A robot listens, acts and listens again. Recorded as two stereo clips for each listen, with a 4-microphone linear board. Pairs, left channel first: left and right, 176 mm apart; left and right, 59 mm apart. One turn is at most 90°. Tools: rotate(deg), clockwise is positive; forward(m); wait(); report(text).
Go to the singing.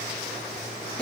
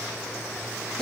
wait()
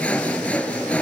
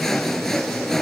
wait()
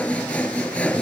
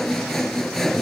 report("I can't make out singing to turn to.")